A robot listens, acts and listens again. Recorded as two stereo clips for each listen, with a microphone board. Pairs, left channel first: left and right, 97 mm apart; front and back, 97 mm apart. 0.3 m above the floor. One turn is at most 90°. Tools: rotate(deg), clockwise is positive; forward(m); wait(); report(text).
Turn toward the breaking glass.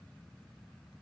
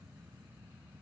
wait()
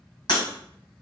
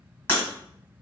rotate(-65)
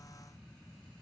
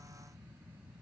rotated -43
rotate(-20)
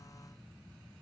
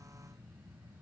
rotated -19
report("I heard breaking glass from this way, but can't make it out now.")